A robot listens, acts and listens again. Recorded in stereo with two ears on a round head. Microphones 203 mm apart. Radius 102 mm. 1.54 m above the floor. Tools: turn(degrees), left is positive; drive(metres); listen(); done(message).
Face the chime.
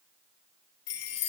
turn(degrees=70)
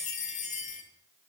turn(degrees=30)
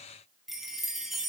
done("Found it: a chime, straight ahead.")